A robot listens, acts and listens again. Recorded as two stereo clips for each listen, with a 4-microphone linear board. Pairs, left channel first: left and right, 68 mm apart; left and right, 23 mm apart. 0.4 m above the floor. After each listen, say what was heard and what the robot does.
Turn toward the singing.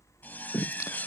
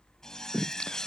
The singing: about 55° left or 125° left. Turn 55° left.
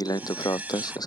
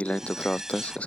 So it is at 85° left. Turn 85° left.
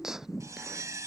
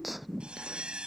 Found it: singing, straight ahead.